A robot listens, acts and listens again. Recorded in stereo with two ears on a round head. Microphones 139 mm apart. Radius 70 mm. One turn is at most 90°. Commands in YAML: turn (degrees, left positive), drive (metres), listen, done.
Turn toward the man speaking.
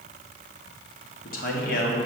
turn: 60
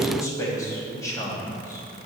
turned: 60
turn: 25
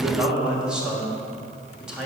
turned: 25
done: "Found it: a man speaking, straight ahead."